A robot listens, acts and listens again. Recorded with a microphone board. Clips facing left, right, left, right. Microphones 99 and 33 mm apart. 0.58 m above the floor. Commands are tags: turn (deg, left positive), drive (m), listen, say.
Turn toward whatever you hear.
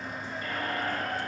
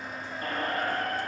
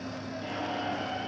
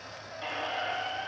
<turn deg="-45"/>
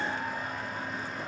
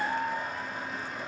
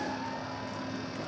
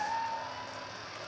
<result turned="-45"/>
<turn deg="-90"/>
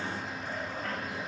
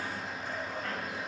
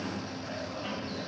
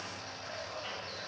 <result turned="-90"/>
<listen/>
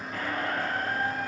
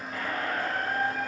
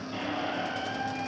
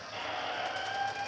<say>Facing the squeak.</say>